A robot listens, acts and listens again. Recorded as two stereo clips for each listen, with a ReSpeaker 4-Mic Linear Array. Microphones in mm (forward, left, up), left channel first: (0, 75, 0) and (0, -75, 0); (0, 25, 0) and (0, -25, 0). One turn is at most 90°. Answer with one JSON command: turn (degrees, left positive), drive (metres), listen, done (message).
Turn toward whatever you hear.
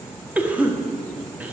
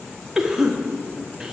{"turn": -30}
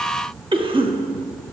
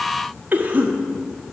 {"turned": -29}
{"turn": -90}
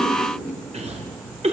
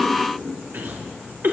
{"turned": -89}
{"turn": -50}
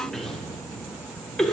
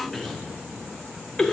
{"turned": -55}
{"done": "Found it: a cough, straight ahead, 1 to 2 m away."}